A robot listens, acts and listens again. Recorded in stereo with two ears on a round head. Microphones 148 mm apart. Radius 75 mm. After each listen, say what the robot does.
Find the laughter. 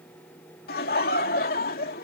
Turn 55° left.
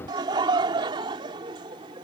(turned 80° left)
Turn 30° right.
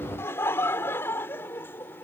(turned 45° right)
Turn 15° left.
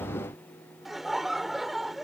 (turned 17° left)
Found it: laughter, straight ahead.